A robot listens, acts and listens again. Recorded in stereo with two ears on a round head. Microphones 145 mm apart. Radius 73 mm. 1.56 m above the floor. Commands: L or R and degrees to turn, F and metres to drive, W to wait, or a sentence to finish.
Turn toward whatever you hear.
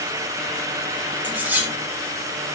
R30
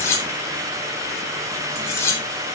L20
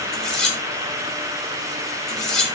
Facing the cutlery clinking.